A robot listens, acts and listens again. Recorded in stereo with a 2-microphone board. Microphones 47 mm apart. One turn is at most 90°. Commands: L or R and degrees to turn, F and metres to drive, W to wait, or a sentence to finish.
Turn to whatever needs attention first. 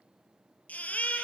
L30
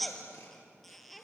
Facing the baby crying, 2 to 4 m away.